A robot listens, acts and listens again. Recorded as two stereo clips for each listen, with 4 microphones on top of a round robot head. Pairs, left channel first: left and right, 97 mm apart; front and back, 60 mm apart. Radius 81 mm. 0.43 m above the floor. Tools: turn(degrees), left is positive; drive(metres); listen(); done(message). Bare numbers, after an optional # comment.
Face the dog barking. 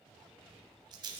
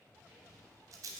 listen()
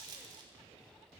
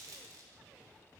listen()
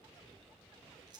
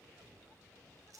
done("I can't make out a dog barking, only a rattle.")